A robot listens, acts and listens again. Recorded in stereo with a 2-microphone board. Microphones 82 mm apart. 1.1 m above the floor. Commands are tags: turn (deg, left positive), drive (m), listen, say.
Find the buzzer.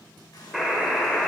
<turn deg="30"/>
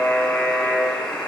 <turn deg="150"/>
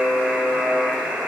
<turn deg="-20"/>
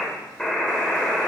<say>Found it: a buzzer, straight ahead.</say>